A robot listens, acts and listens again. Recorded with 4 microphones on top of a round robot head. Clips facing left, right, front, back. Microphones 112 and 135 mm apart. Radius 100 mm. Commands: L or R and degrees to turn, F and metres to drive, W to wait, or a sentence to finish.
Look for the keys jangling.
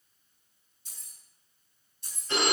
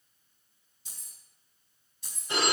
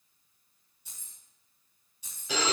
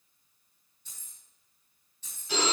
R80
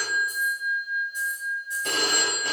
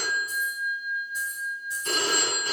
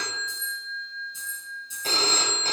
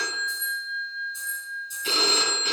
R20
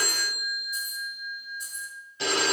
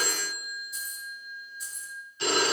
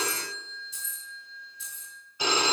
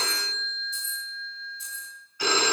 W
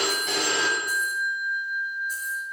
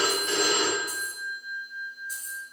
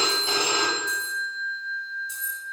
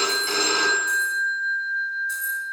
W
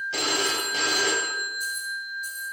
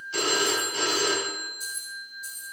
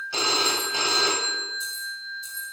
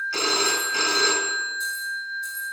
I heard keys jangling from this way, but can't make it out now.